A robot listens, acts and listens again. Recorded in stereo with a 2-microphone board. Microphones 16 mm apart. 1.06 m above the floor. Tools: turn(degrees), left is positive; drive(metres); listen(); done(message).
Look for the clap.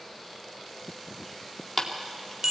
turn(degrees=30)
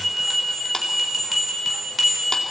listen()
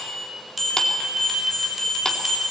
listen()
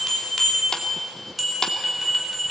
done("I heard a clap, but can't make it out now. It was about 20° right or 140° left.")